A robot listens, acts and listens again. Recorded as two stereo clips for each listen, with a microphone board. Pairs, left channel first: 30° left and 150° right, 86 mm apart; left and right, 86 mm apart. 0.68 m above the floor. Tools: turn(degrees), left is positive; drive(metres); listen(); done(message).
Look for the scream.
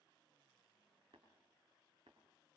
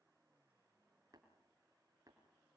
listen()
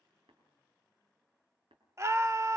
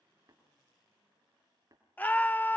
turn(degrees=160)
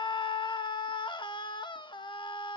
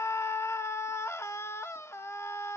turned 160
turn(degrees=35)
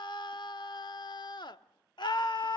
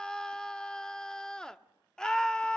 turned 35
turn(degrees=10)
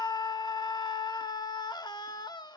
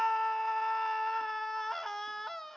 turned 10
done("Found it: a scream, straight ahead.")